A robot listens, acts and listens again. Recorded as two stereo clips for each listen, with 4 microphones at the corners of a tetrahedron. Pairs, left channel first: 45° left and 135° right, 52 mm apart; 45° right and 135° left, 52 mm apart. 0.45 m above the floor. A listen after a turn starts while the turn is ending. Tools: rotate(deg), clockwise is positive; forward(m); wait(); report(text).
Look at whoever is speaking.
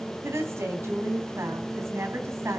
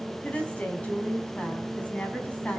rotate(105)
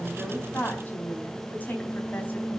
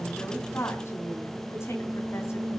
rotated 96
rotate(10)
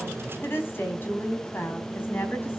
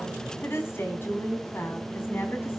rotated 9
report("Found it: a woman speaking, straight ahead.")